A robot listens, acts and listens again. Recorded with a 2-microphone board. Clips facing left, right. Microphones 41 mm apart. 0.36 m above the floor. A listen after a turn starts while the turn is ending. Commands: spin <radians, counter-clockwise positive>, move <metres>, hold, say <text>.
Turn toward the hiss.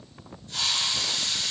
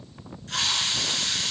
spin -1.57
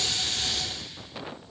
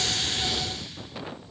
hold
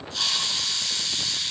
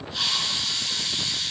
spin -0.17
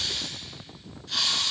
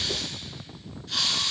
say Facing the hiss, 2 to 4 m away.